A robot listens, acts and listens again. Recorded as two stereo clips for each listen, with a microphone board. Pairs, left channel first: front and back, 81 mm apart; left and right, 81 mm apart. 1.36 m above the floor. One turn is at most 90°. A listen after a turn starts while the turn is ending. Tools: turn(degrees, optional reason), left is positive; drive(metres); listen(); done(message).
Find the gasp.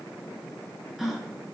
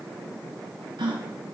turn(degrees=-90, reason="The gasp: 90° right.")
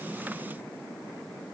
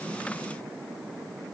done("Facing where the gasp came from. I can't hear it now.")